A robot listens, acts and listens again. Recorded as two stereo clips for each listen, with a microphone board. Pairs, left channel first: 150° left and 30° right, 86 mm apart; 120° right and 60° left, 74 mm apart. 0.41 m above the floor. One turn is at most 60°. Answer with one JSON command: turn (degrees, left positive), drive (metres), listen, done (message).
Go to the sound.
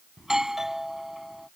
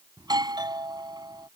{"turn": 55}
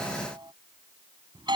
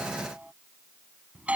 {"turn": -10}
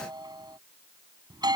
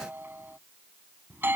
{"drive": 1.0}
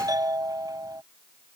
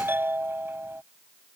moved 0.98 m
{"drive": 1.0}
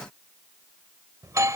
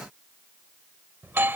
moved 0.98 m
{"turn": 10}
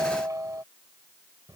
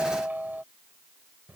{"drive": 1.0}
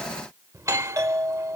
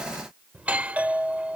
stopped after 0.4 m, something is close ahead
{"done": "I am next to the doorbell."}